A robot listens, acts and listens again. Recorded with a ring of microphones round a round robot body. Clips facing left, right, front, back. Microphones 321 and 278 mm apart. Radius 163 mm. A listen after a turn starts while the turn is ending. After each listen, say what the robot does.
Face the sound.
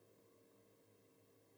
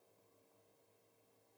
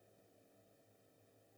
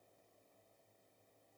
Keep listening.
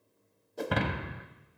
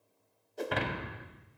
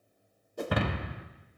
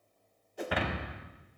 Turn 45° left.
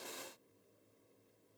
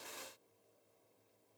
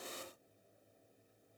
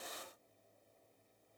Facing where the breaking glass came from. I can't hear it now.